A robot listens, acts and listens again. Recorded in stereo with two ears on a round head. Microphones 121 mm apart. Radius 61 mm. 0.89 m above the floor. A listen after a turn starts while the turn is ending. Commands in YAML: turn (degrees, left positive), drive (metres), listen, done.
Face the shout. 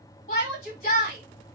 turn: 45
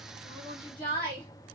turn: 15
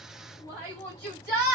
done: "Found it: a shout, straight ahead, 1 to 2 m away."